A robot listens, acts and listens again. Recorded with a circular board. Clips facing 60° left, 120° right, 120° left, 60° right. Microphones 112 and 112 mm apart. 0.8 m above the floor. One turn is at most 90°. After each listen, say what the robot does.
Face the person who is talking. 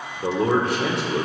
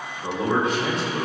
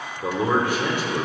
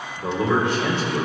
Turn 45° left.
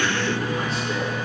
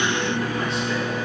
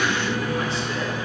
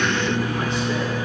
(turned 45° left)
Keep listening.
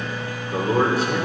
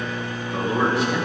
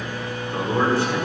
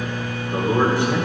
Turn 10° left.
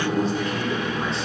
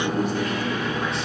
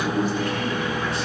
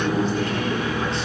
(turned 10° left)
Found it: a man speaking, straight ahead.